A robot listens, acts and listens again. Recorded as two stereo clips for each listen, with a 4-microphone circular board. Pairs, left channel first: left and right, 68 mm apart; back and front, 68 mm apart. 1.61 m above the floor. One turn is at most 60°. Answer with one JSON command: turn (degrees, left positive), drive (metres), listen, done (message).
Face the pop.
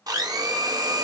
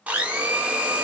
{"listen": true}
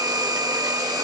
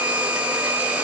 {"listen": true}
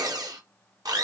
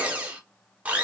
{"done": "I can't make out a pop to turn to."}